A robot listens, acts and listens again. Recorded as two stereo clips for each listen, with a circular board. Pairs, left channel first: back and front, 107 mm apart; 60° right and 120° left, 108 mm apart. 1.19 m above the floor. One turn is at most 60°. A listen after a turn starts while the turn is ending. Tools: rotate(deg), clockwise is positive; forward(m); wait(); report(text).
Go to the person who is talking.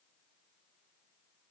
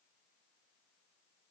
wait()
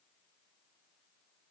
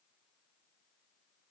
wait()
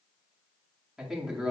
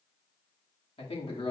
rotate(60)
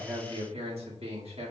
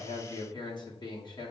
rotate(15)
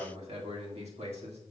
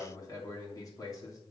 forward(1.0)
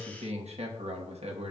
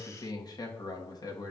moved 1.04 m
forward(1.0)
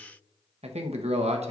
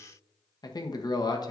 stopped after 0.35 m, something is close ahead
rotate(10)
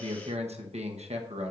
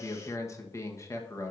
report("Arrived at the man speaking, straight ahead.")